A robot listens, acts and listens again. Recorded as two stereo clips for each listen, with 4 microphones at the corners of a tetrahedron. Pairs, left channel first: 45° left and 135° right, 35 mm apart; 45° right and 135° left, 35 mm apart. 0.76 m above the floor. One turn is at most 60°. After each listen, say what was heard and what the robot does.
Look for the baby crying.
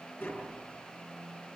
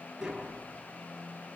Keep listening.
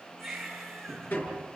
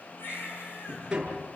The baby crying: 40° right. Turn 40° right.
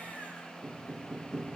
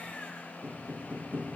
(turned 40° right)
Keep listening.
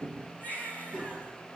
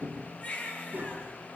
Facing the baby crying, over 4 m away.